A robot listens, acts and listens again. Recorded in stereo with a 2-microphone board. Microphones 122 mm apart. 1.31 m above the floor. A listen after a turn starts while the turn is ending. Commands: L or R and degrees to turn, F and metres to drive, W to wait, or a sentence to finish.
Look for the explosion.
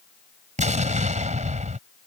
R90
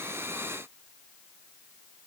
I heard an explosion from this way, but can't make it out now.